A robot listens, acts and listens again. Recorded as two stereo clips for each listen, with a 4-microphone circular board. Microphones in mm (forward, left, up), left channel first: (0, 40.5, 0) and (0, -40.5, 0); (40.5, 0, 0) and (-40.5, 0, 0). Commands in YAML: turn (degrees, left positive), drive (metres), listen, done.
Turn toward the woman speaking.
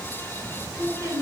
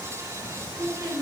turn: -145
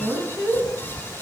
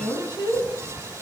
turn: -30
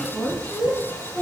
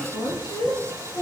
turn: 15
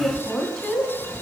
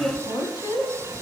done: "Facing the woman speaking, 2 to 4 m away."